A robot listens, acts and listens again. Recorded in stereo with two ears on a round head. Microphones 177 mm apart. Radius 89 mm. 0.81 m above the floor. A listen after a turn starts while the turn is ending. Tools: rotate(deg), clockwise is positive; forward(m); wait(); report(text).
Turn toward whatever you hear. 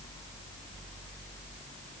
wait()
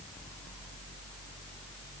wait()
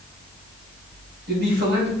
rotate(50)
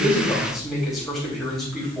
report("Facing the man speaking, over 4 m away.")